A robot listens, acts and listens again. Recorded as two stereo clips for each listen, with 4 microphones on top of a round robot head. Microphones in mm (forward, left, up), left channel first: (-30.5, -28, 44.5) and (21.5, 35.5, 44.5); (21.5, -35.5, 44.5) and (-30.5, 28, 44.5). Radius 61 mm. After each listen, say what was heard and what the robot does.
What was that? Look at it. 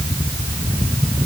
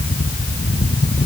Keep listening.
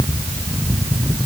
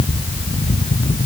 Keep listening.
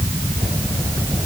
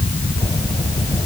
I can't make out anything to turn to.